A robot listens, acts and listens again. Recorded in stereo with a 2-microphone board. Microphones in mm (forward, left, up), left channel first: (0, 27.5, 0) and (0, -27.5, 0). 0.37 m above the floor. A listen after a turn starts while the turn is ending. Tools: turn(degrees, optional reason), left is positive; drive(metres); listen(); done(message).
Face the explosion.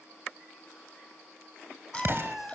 turn(degrees=-50, reason="The explosion: about 50° right or 130° right.")
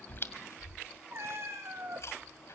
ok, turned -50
listen()
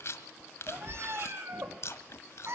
done("I heard an explosion, but can't make it out now. It was about straight ahead or 80° right.")